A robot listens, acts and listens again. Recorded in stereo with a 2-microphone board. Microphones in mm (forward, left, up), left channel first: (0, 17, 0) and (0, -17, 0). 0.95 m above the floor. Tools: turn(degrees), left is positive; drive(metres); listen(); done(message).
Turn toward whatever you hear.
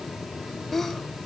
turn(degrees=30)
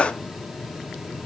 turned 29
turn(degrees=140)
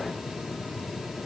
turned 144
done("Facing where the sneeze came from. I can't hear it now.")